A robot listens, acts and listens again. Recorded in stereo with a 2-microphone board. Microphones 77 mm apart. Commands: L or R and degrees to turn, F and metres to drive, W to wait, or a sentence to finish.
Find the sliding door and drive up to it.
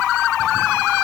W
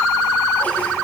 W
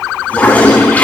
I can't make out a sliding door to turn to.